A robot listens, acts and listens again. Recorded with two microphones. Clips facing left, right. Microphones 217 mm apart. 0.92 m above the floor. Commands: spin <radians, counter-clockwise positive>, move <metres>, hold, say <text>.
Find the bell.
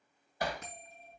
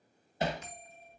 spin 1.05
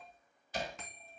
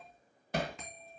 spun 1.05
say Facing the bell.